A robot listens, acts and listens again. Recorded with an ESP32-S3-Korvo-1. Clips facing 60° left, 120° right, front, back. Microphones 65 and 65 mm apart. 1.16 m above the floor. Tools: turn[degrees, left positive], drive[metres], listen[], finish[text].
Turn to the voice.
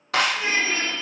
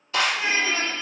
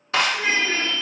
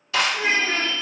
Thought: The child speaking: 175° right.
Action: turn[-175]
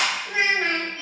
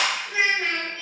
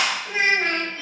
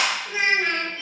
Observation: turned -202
Thought: The child speaking is now 30° left.
Action: turn[30]
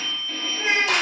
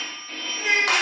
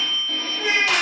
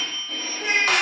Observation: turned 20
Thought: The child speaking is now 10° left.
Action: turn[10]
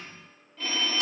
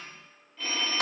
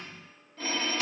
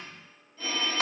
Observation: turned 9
Action: listen[]
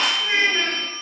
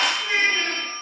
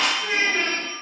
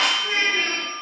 Action: finish[Facing the child speaking.]